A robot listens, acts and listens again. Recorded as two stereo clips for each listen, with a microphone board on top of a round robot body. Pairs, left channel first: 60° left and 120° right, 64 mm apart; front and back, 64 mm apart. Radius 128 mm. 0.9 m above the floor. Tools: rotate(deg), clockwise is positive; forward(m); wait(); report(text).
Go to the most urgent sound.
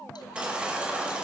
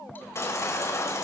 rotate(45)
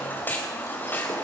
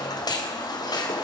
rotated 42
forward(1.0)
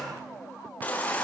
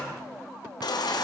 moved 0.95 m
rotate(10)
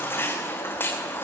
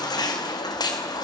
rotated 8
forward(1.0)
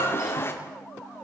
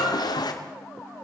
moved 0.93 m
forward(1.0)
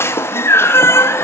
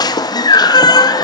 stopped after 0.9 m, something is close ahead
report("I am next to the baby crying.")